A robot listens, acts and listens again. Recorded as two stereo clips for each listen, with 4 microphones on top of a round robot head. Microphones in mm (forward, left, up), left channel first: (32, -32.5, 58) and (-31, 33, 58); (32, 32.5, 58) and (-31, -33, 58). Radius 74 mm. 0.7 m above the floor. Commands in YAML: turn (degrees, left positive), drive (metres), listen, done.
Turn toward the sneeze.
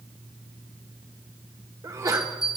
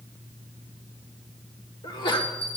turn: 80
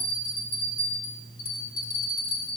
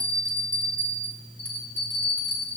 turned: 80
done: "Facing where the sneeze came from. I can't hear it now."